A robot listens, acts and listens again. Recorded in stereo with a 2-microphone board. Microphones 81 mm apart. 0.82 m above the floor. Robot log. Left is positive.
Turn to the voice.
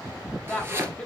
cmd yaw +30
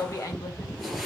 note: So it is at 140° left.
cmd yaw +140
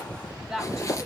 end: Found it: a woman speaking, straight ahead.